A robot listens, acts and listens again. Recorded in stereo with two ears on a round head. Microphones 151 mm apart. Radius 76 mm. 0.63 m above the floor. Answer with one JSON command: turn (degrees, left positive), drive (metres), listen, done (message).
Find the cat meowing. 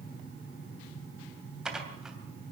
{"listen": true}
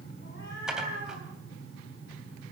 {"turn": 60}
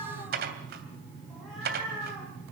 {"done": "Found it: a cat meowing, straight ahead."}